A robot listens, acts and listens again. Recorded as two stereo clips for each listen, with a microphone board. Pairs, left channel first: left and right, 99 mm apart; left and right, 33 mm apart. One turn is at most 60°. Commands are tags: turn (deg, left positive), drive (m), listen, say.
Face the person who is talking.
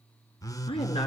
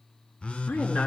<turn deg="60"/>
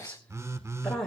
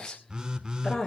<say>Found it: a woman speaking, straight ahead.</say>